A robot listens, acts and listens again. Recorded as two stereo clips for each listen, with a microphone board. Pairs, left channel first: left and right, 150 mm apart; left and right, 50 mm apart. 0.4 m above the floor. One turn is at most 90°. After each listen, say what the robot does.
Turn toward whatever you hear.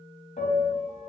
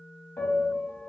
Turn 65° left.
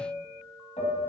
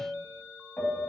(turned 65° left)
Turn 50° left.
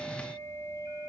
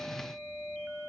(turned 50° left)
Turn 20° left.
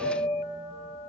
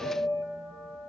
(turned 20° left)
Found it: a piano, straight ahead, under 1 m away.